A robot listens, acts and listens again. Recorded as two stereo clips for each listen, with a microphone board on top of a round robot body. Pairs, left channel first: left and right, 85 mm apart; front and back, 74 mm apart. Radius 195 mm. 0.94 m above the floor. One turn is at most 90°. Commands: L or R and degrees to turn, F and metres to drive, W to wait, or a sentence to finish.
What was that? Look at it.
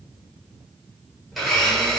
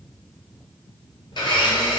Facing the blender, 1 to 2 m away.